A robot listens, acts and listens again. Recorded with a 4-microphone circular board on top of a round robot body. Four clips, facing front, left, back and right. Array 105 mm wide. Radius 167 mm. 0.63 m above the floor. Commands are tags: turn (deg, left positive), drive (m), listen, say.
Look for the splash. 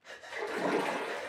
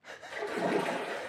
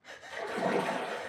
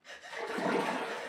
<turn deg="45"/>
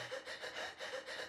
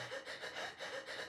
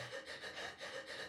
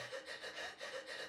<say>Facing where the splash came from. I can't hear it now.</say>